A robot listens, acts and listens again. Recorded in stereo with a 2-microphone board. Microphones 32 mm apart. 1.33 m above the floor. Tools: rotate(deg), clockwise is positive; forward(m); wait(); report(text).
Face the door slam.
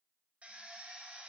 wait()
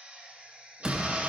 rotate(20)
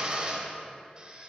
wait()
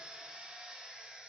report("I heard a door slam, but can't make it out now. It was about straight ahead or 140° right.")